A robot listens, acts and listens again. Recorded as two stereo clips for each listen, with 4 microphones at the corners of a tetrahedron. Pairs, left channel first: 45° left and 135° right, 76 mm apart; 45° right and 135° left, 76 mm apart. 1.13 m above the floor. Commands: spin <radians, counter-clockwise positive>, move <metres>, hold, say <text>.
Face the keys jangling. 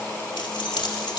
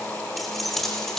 spin 0.70
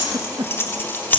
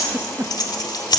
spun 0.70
spin -0.35
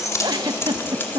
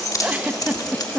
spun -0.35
spin -0.26
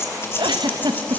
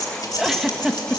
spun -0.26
spin -0.17
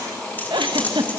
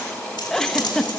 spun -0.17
spin -0.44
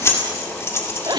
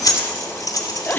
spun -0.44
spin -0.17
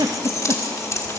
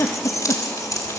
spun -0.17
say Facing the keys jangling, 2 to 4 m away.